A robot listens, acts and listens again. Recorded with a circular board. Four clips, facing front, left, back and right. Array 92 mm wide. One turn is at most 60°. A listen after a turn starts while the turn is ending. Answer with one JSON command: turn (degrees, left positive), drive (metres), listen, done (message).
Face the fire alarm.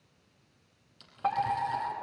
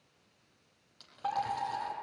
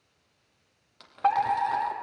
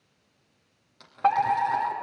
{"turn": -60}
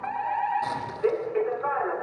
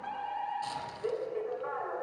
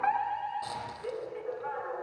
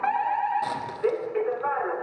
{"turn": -55}
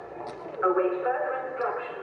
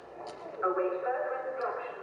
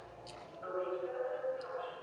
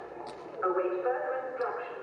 {"turn": -10}
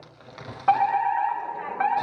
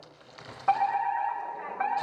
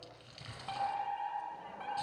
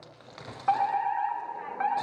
{"done": "Found it: a fire alarm, straight ahead, 2 to 4 m away."}